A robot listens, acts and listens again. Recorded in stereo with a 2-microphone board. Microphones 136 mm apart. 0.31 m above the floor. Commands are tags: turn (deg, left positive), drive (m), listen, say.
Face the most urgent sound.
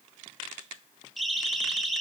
<turn deg="30"/>
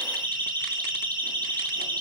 <turn deg="-30"/>
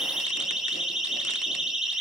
<say>Found it: a siren, straight ahead.</say>